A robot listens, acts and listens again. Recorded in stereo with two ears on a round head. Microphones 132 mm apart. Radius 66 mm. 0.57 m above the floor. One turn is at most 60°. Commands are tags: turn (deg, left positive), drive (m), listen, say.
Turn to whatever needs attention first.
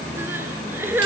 <turn deg="-30"/>
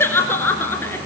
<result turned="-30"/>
<turn deg="15"/>
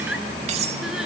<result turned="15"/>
<listen/>
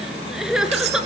<say>Found it: crying, straight ahead, 2 to 4 m away.</say>